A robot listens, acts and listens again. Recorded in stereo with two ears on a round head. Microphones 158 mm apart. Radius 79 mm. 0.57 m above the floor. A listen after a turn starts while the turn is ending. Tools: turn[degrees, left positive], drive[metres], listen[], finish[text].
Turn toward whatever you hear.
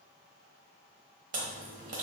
Thought: The chewing: about 45° right or 135° right.
Action: turn[-45]
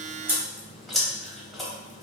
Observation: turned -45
Action: finish[Found it: chewing, straight ahead, 1 to 2 m away.]